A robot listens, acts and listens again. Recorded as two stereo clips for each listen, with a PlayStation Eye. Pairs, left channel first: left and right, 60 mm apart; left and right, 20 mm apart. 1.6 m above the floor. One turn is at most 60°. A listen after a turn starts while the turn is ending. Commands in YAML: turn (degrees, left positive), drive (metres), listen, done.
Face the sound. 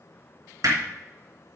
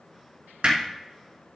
turn: -60
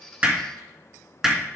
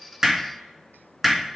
done: "Facing the hammering."